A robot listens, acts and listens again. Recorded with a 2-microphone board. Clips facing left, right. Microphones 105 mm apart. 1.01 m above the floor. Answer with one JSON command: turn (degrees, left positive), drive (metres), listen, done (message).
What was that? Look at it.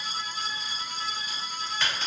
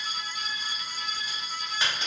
{"turn": -15}
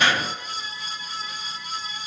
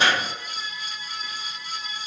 {"turn": -150}
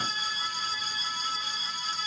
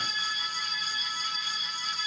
{"done": "Facing where the crack came from. I can't hear it now."}